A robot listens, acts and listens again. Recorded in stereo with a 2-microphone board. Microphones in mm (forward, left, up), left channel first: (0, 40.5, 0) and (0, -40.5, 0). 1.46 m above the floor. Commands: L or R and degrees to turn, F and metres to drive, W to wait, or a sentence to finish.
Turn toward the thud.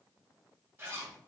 W
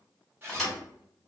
L30
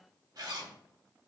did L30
W
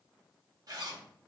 I heard a thud, but can't make it out now. It was about 25° right or 145° left.